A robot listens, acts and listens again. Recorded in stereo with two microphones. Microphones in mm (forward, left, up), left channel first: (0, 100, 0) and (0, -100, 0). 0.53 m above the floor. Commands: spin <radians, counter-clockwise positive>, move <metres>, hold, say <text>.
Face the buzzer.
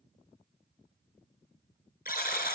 spin 0.87
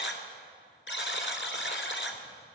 spin 1.31
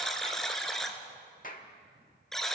say Facing the buzzer.